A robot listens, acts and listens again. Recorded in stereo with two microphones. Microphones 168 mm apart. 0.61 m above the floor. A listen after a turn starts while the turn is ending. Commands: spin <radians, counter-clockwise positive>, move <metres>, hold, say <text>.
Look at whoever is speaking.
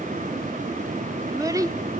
spin -0.35
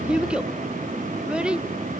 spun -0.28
say Facing the child speaking, under 1 m away.